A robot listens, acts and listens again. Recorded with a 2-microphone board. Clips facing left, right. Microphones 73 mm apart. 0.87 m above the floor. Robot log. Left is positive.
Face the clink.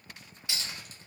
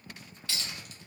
cmd yaw +30
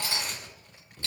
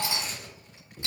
note: So it is at 15° right.
cmd yaw -15
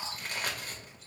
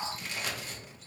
cmd idle
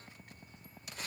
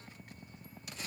cmd idle
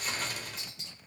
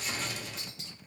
end: Facing where the clink came from. I can't hear it now.